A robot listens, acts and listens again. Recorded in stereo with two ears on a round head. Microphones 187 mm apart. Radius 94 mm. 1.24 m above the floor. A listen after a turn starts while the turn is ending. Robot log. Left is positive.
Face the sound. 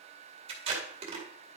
note: The tape being pulled: about 30° right or 150° right.
cmd yaw -30
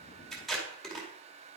end: Facing the tape being pulled, 2 to 4 m away.